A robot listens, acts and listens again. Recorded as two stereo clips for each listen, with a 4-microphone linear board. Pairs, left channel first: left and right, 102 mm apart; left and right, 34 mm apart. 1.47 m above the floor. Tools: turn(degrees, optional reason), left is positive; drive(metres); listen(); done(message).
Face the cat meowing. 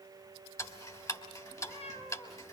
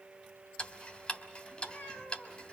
turn(degrees=90)
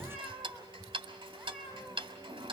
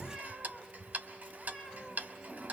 done("Found it: a cat meowing, straight ahead, over 4 m away.")